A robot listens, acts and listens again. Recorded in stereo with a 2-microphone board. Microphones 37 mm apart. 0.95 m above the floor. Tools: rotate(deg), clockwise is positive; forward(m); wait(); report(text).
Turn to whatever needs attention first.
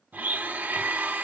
wait()
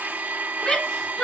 rotate(-20)
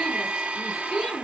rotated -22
report("Found it: a shout, straight ahead.")